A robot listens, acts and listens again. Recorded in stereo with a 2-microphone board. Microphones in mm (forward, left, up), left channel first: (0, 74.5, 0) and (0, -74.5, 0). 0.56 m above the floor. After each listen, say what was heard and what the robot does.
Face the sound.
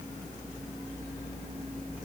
Keep listening.
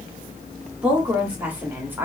Turn 30° right.
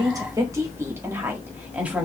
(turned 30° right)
Turn 30° right.
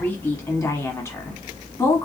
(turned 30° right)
So it is at 20° left. Turn 20° left.
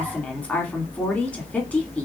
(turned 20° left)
The woman speaking is now 10° left. Turn 10° left.
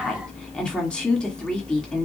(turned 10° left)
Found it: a woman speaking, straight ahead, 1 to 2 m away.